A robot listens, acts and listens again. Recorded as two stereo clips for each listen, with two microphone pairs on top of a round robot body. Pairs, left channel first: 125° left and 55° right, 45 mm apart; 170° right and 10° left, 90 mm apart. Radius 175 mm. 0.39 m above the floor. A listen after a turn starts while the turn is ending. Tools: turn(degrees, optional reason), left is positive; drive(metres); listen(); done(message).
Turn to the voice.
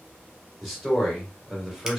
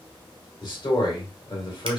turn(degrees=-140, reason="The man speaking: 140° right.")
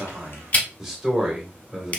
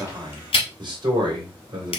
turn(degrees=20, reason="The man speaking is now 20° left.")
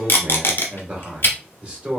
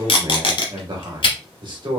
done("Facing the man speaking, 1 to 2 m away.")